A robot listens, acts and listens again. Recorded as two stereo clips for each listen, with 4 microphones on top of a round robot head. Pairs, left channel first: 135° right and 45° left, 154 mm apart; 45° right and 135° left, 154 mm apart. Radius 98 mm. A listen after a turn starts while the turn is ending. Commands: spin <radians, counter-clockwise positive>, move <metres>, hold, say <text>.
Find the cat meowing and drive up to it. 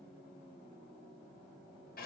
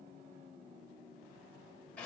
hold
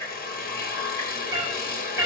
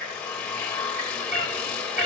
spin 2.09
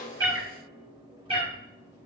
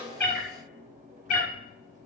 spin -0.17
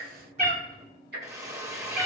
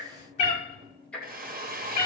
move 1.0
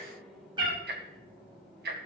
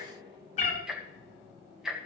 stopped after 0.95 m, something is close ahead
spin -0.17
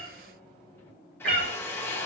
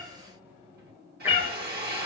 say I am next to the cat meowing.